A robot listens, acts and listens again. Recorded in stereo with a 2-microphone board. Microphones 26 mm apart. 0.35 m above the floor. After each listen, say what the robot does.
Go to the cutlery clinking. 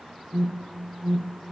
Keep listening.
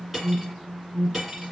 Turn 30° right.
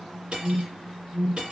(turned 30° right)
Turn 140° right.
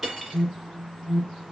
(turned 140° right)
Drive 1.0 m forward.
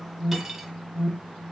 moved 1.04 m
Drive 1.0 m forward.
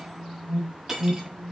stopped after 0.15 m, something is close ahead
Turn 15° right.
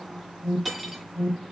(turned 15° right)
Arrived at the cutlery clinking, straight ahead.